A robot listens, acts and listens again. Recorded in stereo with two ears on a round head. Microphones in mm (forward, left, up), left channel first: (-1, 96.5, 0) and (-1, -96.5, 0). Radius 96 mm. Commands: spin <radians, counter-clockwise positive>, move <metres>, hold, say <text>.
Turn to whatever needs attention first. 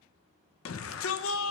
spin 1.13
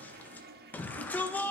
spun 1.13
spin 0.17
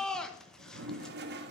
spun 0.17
say Found it: a shout, straight ahead.